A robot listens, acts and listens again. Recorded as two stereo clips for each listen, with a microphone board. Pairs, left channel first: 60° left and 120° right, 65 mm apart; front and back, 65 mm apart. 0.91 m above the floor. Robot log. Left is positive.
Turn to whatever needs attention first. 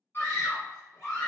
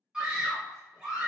note: The scream: 110° left.
cmd yaw +110
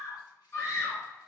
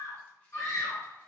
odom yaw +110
note: The scream is now 20° left.
cmd yaw +20
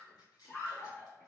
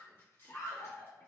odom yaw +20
end: Found it: a scream, straight ahead, 1 to 2 m away.